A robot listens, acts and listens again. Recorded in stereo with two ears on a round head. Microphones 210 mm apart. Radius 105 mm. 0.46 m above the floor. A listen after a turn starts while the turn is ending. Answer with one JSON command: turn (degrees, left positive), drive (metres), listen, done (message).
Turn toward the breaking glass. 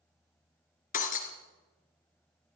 {"turn": 35}
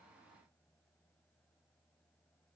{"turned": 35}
{"listen": true}
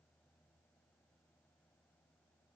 {"done": "I heard breaking glass, but can't make it out now. It was about straight ahead or 110° left."}